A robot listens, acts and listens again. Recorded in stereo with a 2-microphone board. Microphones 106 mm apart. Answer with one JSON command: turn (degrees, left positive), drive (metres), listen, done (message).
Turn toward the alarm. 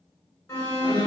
{"turn": 35}
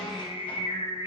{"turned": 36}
{"listen": true}
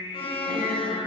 {"turn": 105}
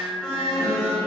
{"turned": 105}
{"done": "Facing the alarm."}